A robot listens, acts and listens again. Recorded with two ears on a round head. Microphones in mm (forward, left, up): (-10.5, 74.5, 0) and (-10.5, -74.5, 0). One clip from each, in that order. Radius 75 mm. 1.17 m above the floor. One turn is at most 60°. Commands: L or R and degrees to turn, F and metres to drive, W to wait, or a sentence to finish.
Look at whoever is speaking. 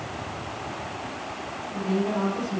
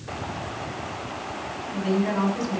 R60
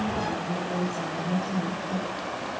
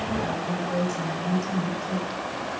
R45
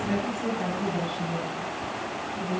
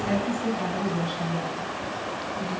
R30
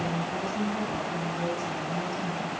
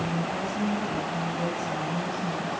L15
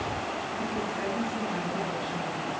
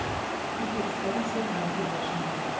W
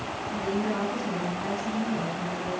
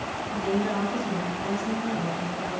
Found it: a woman speaking, straight ahead, over 4 m away.